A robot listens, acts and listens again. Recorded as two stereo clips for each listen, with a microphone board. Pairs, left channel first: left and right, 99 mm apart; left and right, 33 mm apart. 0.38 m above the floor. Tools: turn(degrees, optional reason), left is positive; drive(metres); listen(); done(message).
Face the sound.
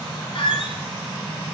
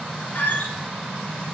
turn(degrees=70, reason="The squeak: about 70° left or 110° left.")
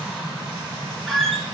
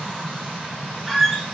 done("Facing the squeak.")